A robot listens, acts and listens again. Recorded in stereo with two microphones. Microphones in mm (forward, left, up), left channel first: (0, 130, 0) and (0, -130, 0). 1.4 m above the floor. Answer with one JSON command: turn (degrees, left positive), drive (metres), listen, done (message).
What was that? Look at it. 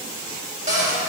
{"turn": -30}
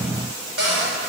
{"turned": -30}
{"turn": -120}
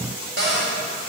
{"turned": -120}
{"turn": -45}
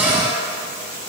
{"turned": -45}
{"done": "Facing the cupboard door."}